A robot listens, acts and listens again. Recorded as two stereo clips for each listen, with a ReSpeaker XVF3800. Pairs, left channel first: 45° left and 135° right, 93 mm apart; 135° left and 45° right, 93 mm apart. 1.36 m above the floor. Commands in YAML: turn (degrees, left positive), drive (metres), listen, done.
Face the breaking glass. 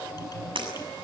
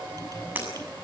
turn: -115
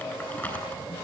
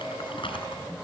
done: "Facing where the breaking glass came from. I can't hear it now."